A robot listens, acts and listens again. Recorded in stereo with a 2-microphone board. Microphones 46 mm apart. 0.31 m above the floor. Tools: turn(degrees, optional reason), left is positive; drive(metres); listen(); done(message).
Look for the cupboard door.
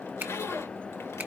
listen()
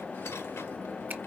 listen()
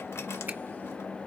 done("I can't make out a cupboard door to turn to.")